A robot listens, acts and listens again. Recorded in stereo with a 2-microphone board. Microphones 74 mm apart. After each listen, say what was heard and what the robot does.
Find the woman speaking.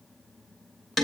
Keep listening.
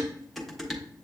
Keep listening.
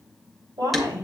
Turn 90° right.
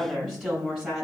Found it: a woman speaking, straight ahead.